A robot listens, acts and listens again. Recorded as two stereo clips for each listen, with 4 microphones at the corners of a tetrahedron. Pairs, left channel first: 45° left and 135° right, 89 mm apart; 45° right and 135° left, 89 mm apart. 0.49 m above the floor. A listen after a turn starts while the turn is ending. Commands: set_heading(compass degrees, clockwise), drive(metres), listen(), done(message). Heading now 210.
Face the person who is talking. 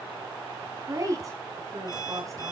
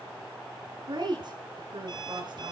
set_heading(40)
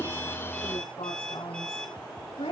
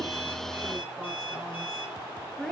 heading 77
set_heading(42)
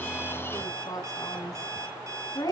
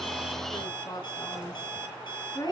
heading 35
done("Found it: a woman speaking, straight ahead, over 4 m away.")